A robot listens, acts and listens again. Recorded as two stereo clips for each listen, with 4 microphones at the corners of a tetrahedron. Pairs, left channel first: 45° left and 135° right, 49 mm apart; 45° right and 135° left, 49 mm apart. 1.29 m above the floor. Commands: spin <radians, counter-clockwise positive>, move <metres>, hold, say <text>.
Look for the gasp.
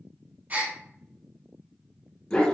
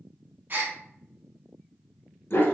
spin 3.05
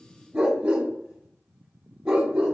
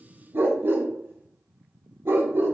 say I heard a gasp from this way, but can't make it out now.